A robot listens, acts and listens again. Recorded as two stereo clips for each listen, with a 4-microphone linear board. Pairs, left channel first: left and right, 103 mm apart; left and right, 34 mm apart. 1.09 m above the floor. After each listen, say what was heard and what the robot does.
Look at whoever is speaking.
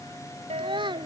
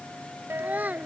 The child speaking: about 50° right or 130° right. Turn 50° right.
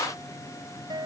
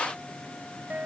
Keep listening.
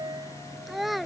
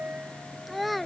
Facing the child speaking.